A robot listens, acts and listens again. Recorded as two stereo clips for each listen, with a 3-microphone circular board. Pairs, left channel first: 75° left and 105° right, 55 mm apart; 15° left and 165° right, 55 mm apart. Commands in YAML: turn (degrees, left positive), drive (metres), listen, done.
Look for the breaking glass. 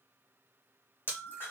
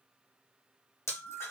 turn: 30
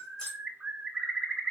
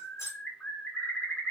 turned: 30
done: "Found it: breaking glass, straight ahead, 1 to 2 m away."